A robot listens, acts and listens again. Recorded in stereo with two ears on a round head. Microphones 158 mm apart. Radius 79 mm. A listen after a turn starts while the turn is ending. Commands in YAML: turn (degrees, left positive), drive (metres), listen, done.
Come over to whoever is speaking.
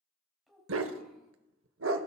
turn: 30
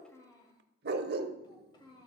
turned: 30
turn: 155
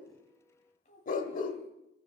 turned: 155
turn: 45
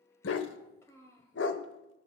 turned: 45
turn: 15
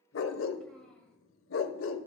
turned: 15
listen: true
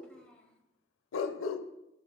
drive: 1.0
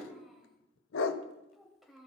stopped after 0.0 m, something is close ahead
done: "Something is in my way. I am facing the child speaking but have not reached it."